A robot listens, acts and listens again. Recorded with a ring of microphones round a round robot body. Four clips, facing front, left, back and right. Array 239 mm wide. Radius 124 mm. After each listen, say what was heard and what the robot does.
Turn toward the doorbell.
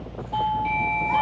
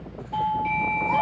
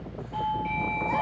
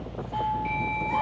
The doorbell: 40° left. Turn 40° left.
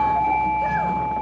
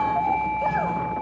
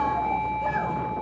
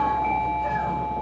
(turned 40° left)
The doorbell is now 15° right. Turn 15° right.
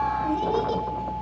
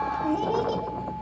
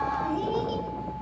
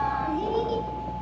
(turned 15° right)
Keep listening.
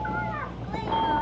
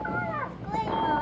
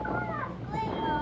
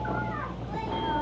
Keep listening.
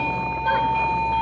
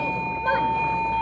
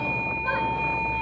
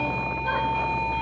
Found it: a doorbell, straight ahead, 2 to 4 m away.